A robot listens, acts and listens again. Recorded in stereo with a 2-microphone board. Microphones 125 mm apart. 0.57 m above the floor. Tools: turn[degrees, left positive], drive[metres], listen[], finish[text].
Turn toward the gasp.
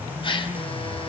Thought: The gasp: about 45° left or 135° left.
Action: turn[45]
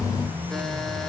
Action: listen[]
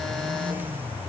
Action: finish[I heard a gasp, but can't make it out now. It was about straight ahead or 90° left.]